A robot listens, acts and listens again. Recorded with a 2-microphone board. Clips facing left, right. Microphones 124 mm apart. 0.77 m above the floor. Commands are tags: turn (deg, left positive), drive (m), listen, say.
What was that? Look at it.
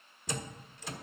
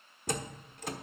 <turn deg="-50"/>
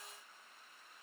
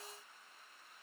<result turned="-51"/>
<listen/>
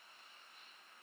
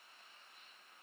<say>I heard a door slam, but can't make it out now. It was about straight ahead or 80° right.</say>